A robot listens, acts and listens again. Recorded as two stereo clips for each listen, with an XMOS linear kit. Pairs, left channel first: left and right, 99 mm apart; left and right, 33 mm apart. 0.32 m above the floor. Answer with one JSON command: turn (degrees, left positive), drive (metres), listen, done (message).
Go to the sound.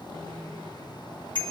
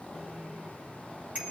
{"turn": -50}
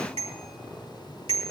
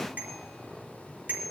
{"turn": -80}
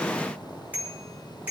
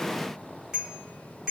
{"turn": -15}
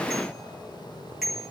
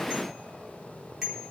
{"drive": 1.0}
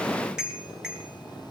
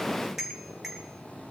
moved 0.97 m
{"drive": 1.0}
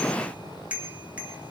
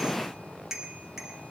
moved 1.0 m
{"turn": -15}
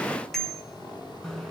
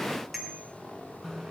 {"drive": 1.0}
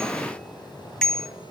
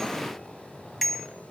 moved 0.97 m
{"drive": 1.0}
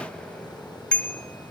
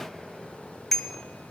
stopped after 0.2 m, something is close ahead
{"turn": 15}
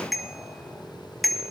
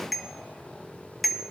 {"done": "Arrived at the bicycle bell, straight ahead."}